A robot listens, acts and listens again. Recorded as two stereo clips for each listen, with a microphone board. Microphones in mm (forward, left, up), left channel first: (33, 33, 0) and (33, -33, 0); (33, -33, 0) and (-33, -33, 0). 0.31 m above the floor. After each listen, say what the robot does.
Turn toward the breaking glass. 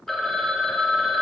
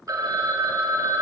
Keep listening.
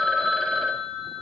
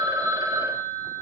Keep listening.
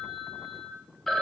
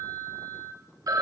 I can't make out breaking glass to turn to.